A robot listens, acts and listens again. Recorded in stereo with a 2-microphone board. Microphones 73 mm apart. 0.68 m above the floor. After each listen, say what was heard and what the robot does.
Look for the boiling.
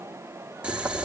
Turn 30° right.
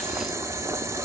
So it is at 135° right. Turn 135° right.
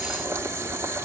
The boiling is now 45° right. Turn 45° right.
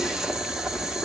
The boiling is now 10° right. Turn 10° right.
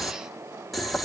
Facing the boiling, 1 to 2 m away.